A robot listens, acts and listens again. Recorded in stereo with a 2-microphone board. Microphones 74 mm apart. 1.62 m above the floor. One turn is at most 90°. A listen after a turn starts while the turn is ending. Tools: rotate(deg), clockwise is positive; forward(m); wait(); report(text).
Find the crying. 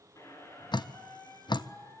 wait()
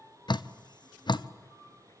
wait()
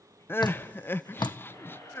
rotate(-30)
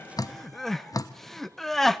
report("Found it: crying, straight ahead.")